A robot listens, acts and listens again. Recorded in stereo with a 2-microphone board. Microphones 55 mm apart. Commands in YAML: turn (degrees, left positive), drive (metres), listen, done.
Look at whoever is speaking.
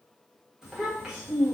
turn: -30
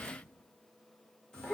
turn: 15
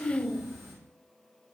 done: "Facing the child speaking, 1 to 2 m away."